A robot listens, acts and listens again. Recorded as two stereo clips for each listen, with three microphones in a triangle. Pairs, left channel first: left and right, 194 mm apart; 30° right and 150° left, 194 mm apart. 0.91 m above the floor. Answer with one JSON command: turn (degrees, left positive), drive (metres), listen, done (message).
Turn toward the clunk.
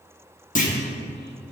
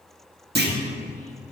{"turn": 130}
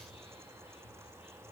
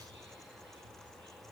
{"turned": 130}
{"done": "I heard a clunk from this way, but can't make it out now."}